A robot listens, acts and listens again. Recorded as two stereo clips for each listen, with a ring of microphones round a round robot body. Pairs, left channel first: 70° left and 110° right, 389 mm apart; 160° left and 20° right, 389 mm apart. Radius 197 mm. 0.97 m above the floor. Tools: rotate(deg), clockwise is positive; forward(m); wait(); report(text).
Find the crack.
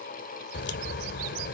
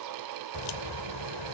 rotate(-130)
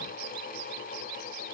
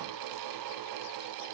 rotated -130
report("Facing where the crack came from. I can't hear it now.")